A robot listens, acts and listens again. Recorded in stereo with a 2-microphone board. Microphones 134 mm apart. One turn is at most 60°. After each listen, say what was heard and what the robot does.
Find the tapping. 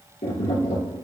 The tapping: about 70° left or 110° left. Turn 60° left.
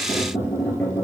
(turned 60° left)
So it is at 15° left. Turn 15° left.
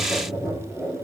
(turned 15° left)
Facing the tapping, 2 to 4 m away.